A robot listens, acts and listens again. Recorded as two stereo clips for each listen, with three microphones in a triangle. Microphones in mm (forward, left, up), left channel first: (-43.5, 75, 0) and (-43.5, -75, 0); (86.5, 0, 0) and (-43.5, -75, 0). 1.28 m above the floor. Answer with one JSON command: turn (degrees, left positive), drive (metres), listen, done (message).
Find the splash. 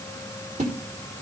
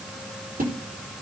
{"turn": -130}
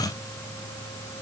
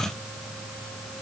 {"done": "Facing where the splash came from. I can't hear it now."}